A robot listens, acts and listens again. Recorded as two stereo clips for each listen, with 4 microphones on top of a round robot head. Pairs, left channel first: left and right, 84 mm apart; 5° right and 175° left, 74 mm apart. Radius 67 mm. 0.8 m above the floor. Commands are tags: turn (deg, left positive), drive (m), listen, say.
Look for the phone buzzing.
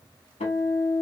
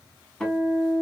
<listen/>
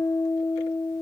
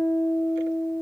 <listen/>
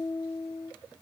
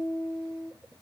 <say>I can't make out a phone buzzing, only a guitar.</say>